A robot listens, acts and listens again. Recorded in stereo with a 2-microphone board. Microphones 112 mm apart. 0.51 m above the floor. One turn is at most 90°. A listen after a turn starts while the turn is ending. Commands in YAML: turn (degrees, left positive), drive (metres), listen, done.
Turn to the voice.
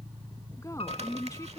turn: 30
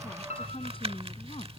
turn: 90
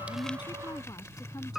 turn: 35
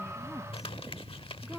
listen: true
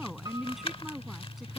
done: "Facing the woman speaking."